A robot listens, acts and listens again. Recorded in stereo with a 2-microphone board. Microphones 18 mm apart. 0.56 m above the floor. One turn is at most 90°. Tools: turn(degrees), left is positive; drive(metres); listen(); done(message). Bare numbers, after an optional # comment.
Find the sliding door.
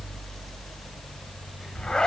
listen()
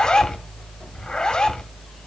listen()
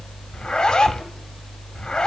done("I can't make out a sliding door, only a zipper.")